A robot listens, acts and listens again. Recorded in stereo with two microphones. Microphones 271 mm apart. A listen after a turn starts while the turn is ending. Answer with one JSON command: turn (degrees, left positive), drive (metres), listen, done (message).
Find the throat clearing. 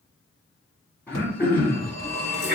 {"turn": 30}
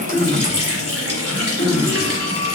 {"turn": 145}
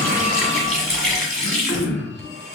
{"turn": 35}
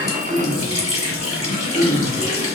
{"done": "Found it: throat clearing, straight ahead."}